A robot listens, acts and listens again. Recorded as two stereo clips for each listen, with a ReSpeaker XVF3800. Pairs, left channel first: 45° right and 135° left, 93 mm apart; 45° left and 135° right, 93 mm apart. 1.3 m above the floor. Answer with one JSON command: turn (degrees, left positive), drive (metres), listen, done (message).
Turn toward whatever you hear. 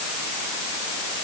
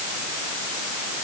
{"listen": true}
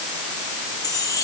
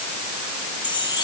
{"done": "Found it: a chime, straight ahead."}